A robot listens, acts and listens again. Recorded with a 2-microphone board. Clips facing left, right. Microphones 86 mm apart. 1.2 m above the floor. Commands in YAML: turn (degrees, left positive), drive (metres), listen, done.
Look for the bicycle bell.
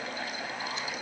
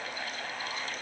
listen: true
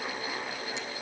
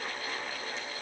listen: true
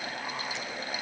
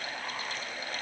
done: "I can't make out a bicycle bell."